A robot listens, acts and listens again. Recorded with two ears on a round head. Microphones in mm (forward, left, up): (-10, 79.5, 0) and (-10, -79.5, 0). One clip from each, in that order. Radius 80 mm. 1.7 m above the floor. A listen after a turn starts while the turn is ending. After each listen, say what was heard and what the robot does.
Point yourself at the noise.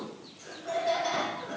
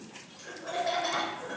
The laughter: about 30° right or 150° right. Turn 30° right.
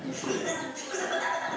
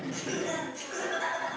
Facing the laughter.